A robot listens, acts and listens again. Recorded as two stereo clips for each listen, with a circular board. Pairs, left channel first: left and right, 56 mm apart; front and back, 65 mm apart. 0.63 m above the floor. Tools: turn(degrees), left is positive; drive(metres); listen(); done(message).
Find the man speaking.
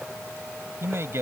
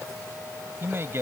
turn(degrees=-130)
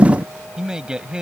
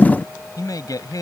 turn(degrees=-15)
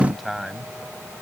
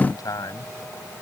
done("Facing the man speaking.")